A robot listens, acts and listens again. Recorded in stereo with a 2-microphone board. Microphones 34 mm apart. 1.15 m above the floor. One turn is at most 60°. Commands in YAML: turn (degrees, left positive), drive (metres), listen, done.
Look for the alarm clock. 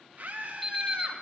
turn: 30
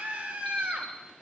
listen: true
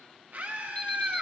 listen: true
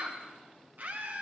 done: "I heard an alarm clock, but can't make it out now. It was about 25° right or 145° left."